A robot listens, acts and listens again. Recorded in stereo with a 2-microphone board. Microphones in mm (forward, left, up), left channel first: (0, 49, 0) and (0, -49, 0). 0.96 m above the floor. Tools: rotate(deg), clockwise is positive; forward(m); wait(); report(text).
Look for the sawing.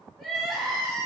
wait()
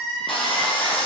rotate(-60)
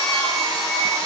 report("Facing the sawing, under 1 m away.")